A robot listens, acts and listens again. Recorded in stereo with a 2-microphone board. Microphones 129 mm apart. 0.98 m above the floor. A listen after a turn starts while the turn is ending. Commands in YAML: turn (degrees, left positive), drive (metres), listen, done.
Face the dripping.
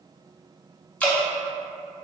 turn: 30
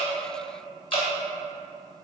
turn: 135
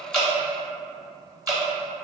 turn: -30
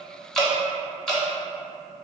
done: "Found it: dripping, straight ahead, under 1 m away."